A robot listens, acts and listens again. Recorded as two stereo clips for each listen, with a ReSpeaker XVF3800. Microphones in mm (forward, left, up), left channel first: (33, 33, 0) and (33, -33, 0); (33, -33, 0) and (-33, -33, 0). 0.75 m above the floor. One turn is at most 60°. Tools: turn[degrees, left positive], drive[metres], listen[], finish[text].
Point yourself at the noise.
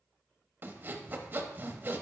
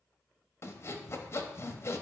Thought: The sawing: 35° right.
Action: turn[-35]
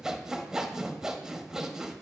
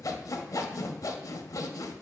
Thought: The sawing is now 10° right.
Action: turn[-10]
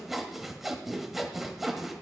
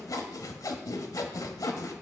Action: finish[Found it: sawing, straight ahead, under 1 m away.]